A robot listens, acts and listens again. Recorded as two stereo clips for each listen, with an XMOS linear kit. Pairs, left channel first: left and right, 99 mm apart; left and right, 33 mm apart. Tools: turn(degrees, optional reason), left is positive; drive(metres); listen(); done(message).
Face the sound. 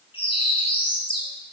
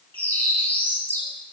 turn(degrees=65, reason="The bird: about 65° left or 115° left.")
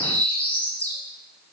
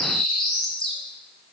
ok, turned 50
turn(degrees=15, reason="So it is at 15° left.")
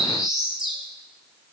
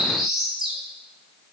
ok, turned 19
done("Facing the bird, 2 to 4 m away.")